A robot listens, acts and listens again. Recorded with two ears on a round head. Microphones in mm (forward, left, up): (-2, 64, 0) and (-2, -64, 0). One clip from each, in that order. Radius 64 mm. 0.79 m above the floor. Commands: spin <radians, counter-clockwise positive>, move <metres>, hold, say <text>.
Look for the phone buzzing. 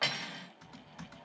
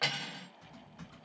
spin -1.22
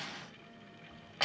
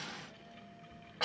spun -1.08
spin -0.26
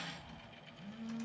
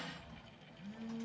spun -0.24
say Found it: a phone buzzing, straight ahead.